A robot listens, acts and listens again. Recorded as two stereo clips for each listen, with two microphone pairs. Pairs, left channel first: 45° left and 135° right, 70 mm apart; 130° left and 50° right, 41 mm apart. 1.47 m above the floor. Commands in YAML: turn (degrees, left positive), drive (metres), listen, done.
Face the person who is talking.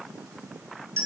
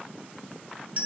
listen: true
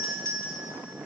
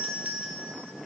listen: true
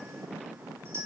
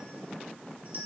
done: "I can't make out anyone speaking, only a doorbell."